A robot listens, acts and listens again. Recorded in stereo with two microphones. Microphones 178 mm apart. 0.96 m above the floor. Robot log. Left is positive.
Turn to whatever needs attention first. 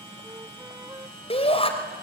note: The shout: about 35° left or 145° left.
cmd yaw +35
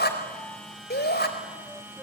note: So it is at 115° left.
cmd yaw +115
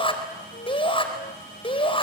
note: The shout is now 30° left.
cmd yaw +30
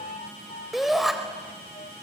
end: Facing the shout, over 4 m away.